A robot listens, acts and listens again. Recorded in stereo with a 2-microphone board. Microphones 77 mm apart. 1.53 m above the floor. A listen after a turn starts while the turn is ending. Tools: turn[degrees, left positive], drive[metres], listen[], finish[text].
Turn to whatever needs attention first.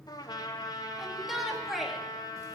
Action: turn[-30]
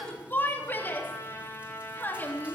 Thought: So it is at 25° left.
Action: turn[25]
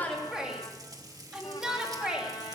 Thought: The shout is now 10° right.
Action: turn[-10]
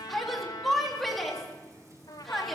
Action: finish[Facing the shout.]